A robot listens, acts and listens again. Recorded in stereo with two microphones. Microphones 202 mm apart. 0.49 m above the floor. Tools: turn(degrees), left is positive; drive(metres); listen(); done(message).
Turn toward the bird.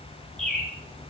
turn(degrees=30)
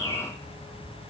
turn(degrees=-25)
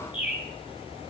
done("Found it: a bird, straight ahead, 2 to 4 m away.")